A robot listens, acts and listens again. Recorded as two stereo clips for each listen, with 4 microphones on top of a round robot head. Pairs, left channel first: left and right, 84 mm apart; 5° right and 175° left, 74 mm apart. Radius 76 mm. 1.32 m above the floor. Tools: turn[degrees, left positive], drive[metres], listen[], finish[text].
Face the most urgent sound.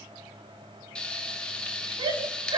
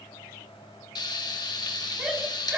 Thought: The shout: 110° right.
Action: turn[-110]
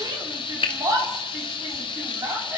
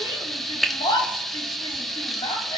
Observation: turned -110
Thought: The shout is now 35° right.
Action: turn[-35]
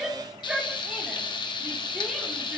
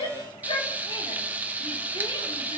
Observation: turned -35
Thought: The shout is now 10° right.
Action: turn[-10]
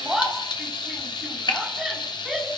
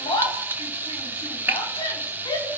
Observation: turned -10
Action: finish[Found it: a shout, straight ahead, over 4 m away.]